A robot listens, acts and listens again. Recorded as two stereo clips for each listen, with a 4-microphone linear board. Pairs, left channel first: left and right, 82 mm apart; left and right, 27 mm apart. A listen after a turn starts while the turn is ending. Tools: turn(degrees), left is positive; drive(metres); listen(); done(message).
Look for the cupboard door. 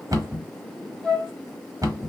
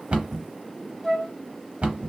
turn(degrees=-50)
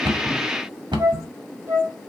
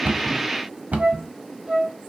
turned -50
turn(degrees=-85)
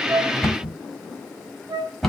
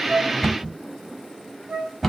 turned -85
done("Facing the cupboard door.")